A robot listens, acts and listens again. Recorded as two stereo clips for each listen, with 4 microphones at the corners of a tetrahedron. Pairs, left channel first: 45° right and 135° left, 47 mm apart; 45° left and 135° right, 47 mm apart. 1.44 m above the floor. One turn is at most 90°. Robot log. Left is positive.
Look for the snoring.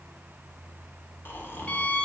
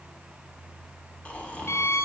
note: The snoring: 15° right.
cmd yaw -15
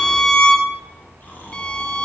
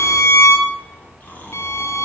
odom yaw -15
end: Facing the snoring, 1 to 2 m away.